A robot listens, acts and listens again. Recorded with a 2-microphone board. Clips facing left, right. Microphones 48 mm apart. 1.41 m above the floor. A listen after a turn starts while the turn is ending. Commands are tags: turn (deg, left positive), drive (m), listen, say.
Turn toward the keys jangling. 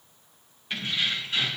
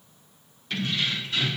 <turn deg="30"/>
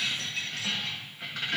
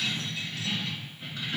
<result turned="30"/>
<turn deg="105"/>
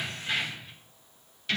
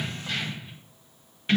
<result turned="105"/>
<turn deg="-30"/>
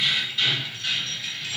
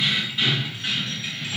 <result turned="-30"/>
<turn deg="-30"/>
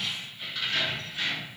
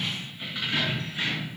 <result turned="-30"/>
<turn deg="-15"/>
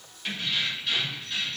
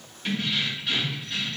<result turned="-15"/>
<say>Found it: keys jangling, straight ahead, 2 to 4 m away.</say>